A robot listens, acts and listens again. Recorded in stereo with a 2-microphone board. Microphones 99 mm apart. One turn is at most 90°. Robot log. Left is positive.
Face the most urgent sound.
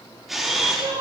note: The crying: about 60° right or 120° right.
cmd yaw -60
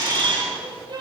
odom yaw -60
note: So it is at 55° right.
cmd yaw -55
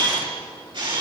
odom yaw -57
cmd idle
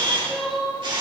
end: Found it: crying, straight ahead.